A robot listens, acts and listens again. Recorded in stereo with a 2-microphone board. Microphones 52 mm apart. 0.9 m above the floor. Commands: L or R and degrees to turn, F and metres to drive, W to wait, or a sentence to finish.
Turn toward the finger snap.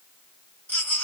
W
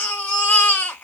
W
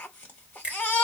R20
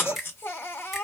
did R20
Found it: a finger snap, straight ahead.